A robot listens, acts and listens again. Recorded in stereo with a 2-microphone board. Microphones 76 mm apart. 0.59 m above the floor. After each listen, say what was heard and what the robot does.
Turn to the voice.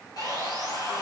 Keep listening.
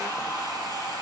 Keep listening.
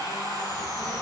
The child speaking: about 30° left or 150° left. Turn 30° left.
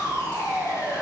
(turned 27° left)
So it is at 120° left. Turn 120° left.
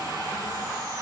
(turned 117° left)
Keep listening.
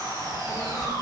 Facing the child speaking, 1 to 2 m away.